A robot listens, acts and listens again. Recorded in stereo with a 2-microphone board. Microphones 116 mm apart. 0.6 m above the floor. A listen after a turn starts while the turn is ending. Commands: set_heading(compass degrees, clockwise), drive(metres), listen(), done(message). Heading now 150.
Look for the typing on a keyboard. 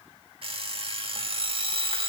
listen()
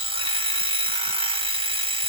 listen()
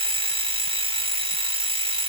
done("I can't make out typing on a keyboard, only an alarm clock.")